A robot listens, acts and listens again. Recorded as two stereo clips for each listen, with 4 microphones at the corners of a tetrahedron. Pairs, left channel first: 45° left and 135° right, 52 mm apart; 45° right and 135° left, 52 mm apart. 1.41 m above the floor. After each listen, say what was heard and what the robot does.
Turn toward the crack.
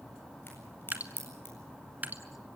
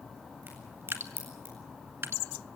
The crack: 90° left. Turn 90° left.
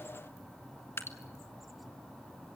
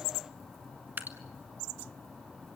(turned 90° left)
Facing where the crack came from. I can't hear it now.